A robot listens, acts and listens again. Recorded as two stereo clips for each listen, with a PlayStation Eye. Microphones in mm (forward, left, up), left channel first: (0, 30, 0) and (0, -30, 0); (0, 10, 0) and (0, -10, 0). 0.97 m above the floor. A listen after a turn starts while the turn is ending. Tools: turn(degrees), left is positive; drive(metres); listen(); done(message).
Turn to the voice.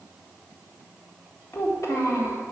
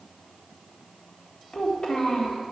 turn(degrees=60)
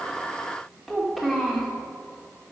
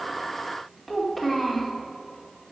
done("Found it: a child speaking, straight ahead.")